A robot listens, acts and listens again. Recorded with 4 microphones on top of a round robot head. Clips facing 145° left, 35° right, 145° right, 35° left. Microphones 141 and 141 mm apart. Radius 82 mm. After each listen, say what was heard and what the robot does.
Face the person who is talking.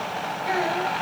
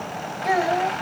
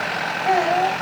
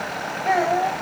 The child speaking: 60° right. Turn 60° right.
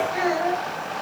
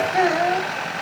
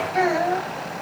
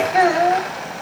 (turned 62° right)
Found it: a child speaking, straight ahead, over 4 m away.